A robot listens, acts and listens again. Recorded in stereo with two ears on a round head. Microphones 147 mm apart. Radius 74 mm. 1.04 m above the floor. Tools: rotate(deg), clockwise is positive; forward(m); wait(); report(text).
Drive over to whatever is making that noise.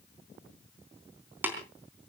rotate(30)
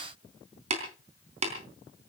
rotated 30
rotate(135)
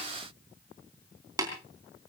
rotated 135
rotate(20)
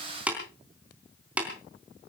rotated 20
rotate(10)
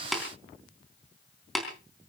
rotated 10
forward(1.0)
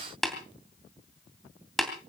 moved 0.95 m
forward(1.0)
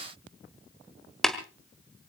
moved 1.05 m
forward(1.0)
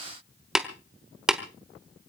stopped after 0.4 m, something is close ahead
report("Arrived at the tapping, straight ahead.")